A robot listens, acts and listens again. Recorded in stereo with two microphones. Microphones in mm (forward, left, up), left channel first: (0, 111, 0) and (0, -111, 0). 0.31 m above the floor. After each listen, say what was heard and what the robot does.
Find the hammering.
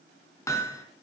Turn 30° left.
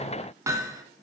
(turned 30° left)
So it is at 15° right. Turn 15° right.
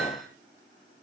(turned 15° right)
Keep listening.
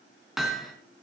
Found it: hammering, straight ahead.